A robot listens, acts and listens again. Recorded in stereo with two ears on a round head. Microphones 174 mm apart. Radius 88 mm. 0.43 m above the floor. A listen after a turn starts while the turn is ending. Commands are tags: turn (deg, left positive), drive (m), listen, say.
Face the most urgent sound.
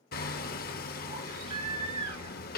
<turn deg="-35"/>
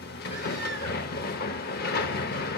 <listen/>
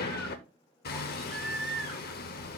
<say>Found it: a baby crying, straight ahead, 2 to 4 m away.</say>